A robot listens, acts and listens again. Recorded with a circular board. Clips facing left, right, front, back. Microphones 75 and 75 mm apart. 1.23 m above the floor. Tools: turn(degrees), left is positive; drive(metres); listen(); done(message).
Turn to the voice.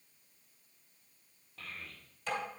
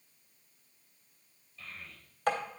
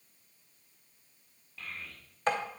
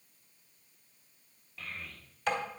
turn(degrees=95)
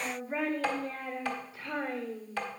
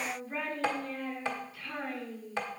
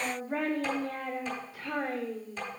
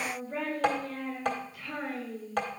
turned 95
turn(degrees=30)
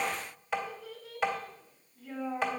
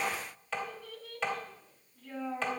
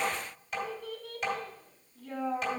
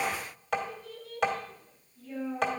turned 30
done("Found it: a child speaking, straight ahead.")